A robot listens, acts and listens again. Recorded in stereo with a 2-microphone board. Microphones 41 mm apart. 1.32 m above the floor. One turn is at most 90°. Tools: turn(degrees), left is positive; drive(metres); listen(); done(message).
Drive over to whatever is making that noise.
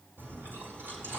turn(degrees=-90)
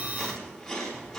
drive(metres=1.0)
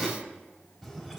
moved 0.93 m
turn(degrees=-10)
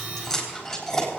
drive(metres=1.0)
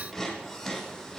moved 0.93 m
drive(metres=1.0)
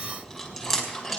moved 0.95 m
drive(metres=1.0)
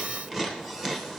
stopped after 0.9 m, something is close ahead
turn(degrees=-10)
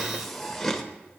done("Arrived at the chewing, straight ahead.")